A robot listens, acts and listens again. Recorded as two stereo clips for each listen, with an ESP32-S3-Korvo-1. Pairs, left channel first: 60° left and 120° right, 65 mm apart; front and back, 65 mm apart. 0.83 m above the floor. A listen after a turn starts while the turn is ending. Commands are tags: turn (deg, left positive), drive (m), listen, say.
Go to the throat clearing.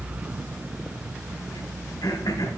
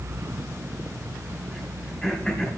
<turn deg="75"/>
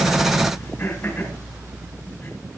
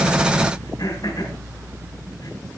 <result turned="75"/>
<drive m="1.0"/>
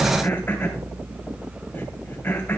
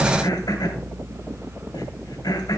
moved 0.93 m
<drive m="1.0"/>
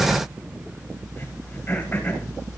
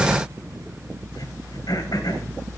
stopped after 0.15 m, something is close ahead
<say>Something is in my way. I am facing the throat clearing but have not reached it.</say>